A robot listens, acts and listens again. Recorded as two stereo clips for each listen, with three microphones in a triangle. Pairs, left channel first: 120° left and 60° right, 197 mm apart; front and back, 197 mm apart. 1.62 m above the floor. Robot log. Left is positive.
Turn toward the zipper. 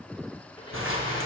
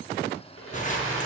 note: The zipper: 55° right.
cmd yaw -55
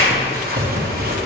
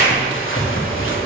note: The zipper is now 20° right.
cmd yaw -20
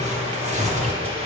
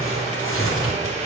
end: Facing the zipper.